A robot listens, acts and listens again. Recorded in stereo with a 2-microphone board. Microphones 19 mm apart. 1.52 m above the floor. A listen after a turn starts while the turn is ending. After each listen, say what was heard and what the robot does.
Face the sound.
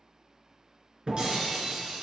The breaking glass: about 45° right or 135° right. Turn 45° right.
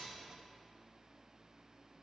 Keep listening.
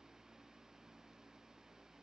I heard breaking glass, but can't make it out now. It was about straight ahead or 90° right.